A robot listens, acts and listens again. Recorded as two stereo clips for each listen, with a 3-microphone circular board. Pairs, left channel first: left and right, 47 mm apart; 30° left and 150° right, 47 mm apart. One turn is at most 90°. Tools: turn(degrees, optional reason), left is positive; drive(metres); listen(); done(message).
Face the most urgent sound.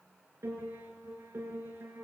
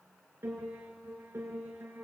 listen()
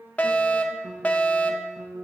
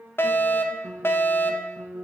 turn(degrees=35, reason="The fire alarm: 35° left.")
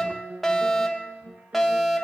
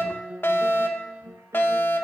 done("Found it: a fire alarm, straight ahead, 2 to 4 m away.")